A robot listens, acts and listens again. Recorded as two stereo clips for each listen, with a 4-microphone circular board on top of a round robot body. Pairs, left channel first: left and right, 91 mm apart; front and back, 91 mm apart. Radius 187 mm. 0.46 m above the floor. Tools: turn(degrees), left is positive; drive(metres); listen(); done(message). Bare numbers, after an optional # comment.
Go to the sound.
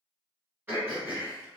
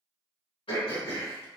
# The throat clearing: 20° right.
turn(-20)
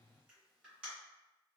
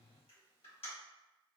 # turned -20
# The throat clearing is now 10° right.
turn(-10)
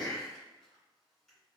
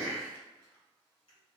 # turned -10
drive(1.0)
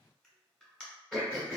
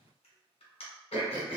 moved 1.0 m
drive(1.0)
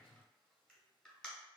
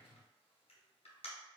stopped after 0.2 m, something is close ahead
# The throat clearing is now 10° left.
turn(10)
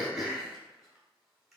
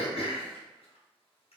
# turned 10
done("Arrived at the throat clearing, straight ahead.")